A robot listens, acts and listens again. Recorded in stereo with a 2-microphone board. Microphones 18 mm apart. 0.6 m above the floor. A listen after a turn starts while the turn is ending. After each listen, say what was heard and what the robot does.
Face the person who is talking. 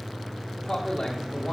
The man speaking: about 60° left or 120° left. Turn 60° left.
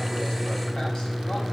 Keep listening.
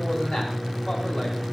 Keep listening.
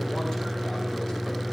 I heard a man speaking, but can't make it out now. It was about straight ahead or 60° left.